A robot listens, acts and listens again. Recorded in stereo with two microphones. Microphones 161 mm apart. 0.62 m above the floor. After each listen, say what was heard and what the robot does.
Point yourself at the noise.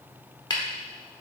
The tapping: about 30° left or 150° left. Turn 30° left.
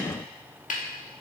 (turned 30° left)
So it is at 120° left. Turn 120° left.
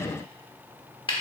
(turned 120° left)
The tapping is now 35° left. Turn 35° left.
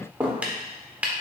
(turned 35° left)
The tapping is now 10° right. Turn 10° right.
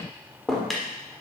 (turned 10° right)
Found it: tapping, straight ahead, 1 to 2 m away.